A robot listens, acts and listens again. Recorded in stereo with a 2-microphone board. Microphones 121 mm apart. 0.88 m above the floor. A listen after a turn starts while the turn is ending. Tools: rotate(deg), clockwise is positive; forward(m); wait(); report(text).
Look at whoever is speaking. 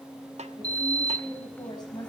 rotate(-35)
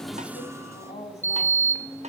rotate(-110)
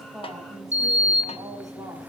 wait()
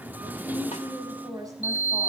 rotate(30)
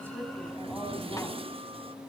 wait()
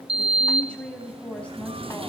rotate(-10)
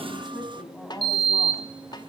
report("Found it: a woman speaking, straight ahead, over 4 m away.")